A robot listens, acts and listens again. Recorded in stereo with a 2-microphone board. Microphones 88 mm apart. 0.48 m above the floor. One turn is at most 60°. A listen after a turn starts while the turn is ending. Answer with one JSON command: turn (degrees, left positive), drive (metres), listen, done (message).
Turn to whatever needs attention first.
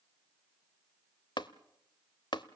{"listen": true}
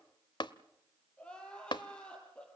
{"turn": 30}
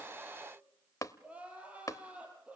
{"turn": -15}
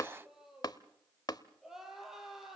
{"done": "Facing the crying, over 4 m away."}